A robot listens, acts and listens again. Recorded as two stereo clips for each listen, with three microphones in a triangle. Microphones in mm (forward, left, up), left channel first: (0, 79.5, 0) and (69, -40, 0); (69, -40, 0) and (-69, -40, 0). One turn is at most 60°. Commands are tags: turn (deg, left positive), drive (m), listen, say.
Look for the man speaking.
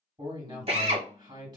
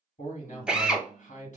<say>Facing the man speaking, 2 to 4 m away.</say>